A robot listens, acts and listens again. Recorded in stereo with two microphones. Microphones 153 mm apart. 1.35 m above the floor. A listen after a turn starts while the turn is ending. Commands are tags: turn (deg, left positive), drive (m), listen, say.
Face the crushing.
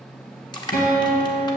<turn deg="30"/>
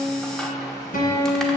<listen/>
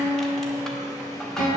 <listen/>
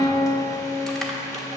<say>I heard crushing, but can't make it out now. It was about straight ahead or 120° left.</say>